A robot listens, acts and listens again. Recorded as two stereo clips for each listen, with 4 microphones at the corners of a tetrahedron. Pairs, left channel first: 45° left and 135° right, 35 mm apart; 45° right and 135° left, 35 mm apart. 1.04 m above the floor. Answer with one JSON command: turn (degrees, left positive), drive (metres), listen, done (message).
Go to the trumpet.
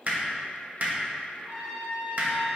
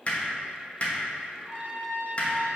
{"turn": 175}
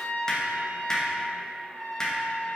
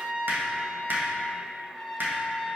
{"turn": 20}
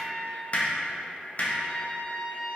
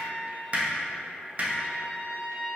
{"drive": 1.0}
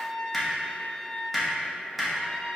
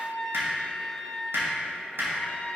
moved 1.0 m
{"turn": -10}
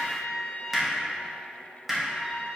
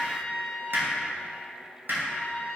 {"drive": 1.0}
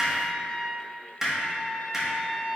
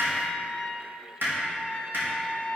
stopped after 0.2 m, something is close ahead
{"done": "I am next to the trumpet."}